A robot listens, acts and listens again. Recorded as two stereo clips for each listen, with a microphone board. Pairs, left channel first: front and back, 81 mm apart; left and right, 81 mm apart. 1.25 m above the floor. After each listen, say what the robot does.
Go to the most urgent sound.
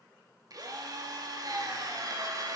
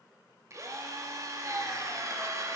Keep listening.
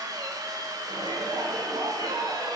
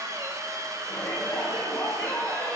Turn 165° left.
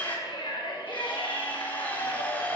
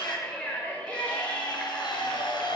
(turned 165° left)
Turn 15° left.
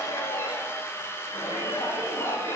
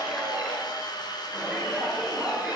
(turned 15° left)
Drive 1.0 m forward.
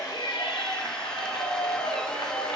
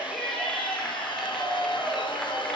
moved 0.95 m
Drive 1.0 m forward.
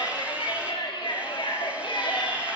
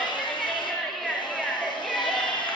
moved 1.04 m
Drive 1.0 m forward.
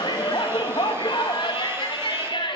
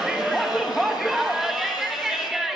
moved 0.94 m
Drive 1.0 m forward.
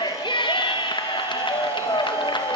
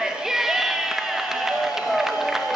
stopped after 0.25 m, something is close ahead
Arrived at the shout, straight ahead.